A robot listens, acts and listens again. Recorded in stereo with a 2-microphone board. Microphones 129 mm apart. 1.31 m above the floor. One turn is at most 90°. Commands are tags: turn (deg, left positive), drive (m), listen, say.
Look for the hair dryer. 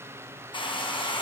<turn deg="35"/>
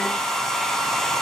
<say>Found it: a hair dryer, straight ahead.</say>